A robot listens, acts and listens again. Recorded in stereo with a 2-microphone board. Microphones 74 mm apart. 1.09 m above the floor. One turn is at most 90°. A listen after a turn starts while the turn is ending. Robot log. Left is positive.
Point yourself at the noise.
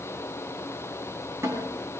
note: The snare drum: about 40° right or 140° right.
cmd yaw -40
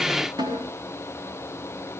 note: So it is at 100° right.
cmd yaw -90
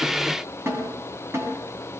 note: The snare drum is now 35° right.
cmd yaw -35
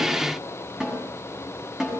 note: The snare drum is now 10° right.
cmd yaw -10
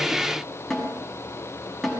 end: Facing the snare drum, over 4 m away.